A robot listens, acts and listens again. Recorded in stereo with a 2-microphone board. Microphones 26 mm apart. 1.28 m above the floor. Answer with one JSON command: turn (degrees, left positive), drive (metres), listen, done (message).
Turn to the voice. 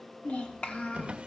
{"turn": 60}
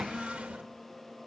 {"done": "Found it: a child speaking, straight ahead, 1 to 2 m away."}